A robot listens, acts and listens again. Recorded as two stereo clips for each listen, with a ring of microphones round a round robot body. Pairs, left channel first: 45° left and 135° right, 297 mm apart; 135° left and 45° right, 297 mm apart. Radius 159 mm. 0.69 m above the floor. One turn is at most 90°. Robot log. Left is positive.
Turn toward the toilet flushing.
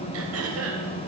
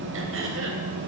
cmd idle
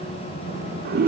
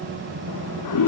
note: The toilet flushing: 165° left.
cmd yaw +90
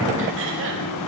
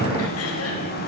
note: Nothing new. It was at 75° left.
cmd yaw +75
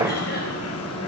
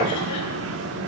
cmd idle
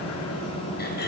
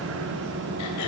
end: I heard a toilet flushing from this way, but can't make it out now.